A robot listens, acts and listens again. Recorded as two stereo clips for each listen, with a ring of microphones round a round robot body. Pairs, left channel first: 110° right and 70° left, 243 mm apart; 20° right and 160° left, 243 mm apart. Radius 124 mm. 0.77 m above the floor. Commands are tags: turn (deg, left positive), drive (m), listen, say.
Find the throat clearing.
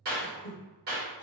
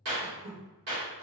<turn deg="-165"/>
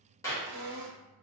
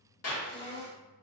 <turn deg="45"/>
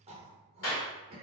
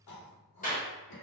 <say>Facing the throat clearing, 1 to 2 m away.</say>